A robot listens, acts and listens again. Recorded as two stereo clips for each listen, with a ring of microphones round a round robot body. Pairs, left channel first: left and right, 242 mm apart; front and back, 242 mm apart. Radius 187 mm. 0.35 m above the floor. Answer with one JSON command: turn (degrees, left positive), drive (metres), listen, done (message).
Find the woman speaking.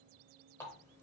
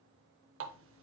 {"listen": true}
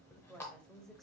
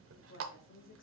{"done": "Found it: a woman speaking, straight ahead, 1 to 2 m away."}